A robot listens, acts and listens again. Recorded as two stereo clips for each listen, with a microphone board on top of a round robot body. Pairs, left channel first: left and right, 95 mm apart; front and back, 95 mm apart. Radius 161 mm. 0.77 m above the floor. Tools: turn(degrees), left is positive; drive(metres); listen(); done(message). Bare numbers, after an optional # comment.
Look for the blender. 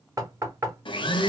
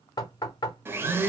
# The blender: 115° left.
turn(115)
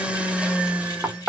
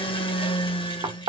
# The blender is now 15° right.
turn(-15)
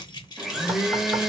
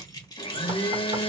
done("Found it: a blender, straight ahead.")